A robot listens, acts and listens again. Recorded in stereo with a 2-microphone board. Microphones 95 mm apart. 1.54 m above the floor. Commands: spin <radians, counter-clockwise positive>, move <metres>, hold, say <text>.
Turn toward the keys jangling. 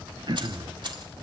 spin -0.96
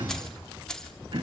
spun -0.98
spin 0.17
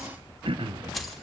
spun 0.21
say Facing the keys jangling, 2 to 4 m away.